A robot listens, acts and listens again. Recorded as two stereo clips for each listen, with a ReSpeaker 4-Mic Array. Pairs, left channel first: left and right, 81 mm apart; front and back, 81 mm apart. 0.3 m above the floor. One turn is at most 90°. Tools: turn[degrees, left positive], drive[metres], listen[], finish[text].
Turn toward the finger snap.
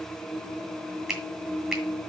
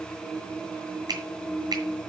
Thought: The finger snap: 175° right.
Action: turn[-90]
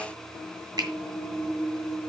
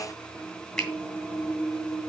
Thought: The finger snap is now 80° right.
Action: turn[-80]
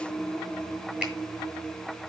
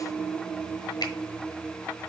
Action: listen[]
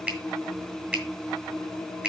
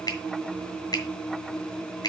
Thought: The finger snap is now 20° right.
Action: turn[-20]
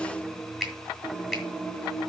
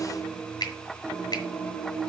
Action: finish[Found it: a finger snap, straight ahead, 2 to 4 m away.]